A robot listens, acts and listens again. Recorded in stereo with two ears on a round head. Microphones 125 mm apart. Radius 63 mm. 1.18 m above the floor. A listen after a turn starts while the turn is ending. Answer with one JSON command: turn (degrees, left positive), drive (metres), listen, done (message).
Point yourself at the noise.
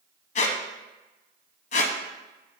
{"turn": 55}
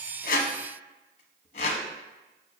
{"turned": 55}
{"turn": 55}
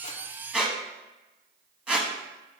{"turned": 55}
{"turn": -10}
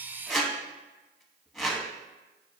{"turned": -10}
{"done": "Facing the squeak, under 1 m away."}